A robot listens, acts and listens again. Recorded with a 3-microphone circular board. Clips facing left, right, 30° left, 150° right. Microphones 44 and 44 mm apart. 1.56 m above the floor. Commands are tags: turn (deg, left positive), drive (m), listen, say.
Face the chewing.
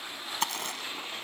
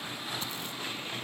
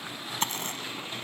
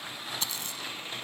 <turn deg="75"/>
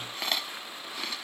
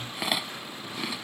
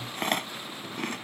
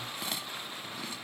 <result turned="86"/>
<turn deg="-10"/>
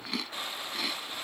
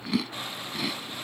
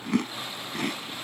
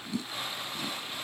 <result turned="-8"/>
<say>Found it: chewing, straight ahead.</say>